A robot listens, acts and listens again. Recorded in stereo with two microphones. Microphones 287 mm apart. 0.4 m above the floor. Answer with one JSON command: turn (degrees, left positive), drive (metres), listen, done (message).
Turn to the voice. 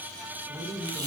{"turn": -20}
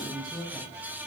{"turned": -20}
{"done": "Facing the woman speaking."}